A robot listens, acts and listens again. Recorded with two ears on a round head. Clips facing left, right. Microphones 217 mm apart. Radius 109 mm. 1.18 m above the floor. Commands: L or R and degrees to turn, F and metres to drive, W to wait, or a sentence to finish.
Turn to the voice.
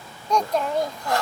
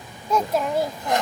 R30
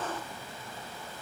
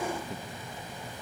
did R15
W
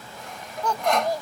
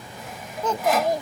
R160
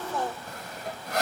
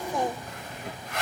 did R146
R15
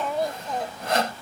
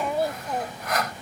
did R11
Facing the child speaking.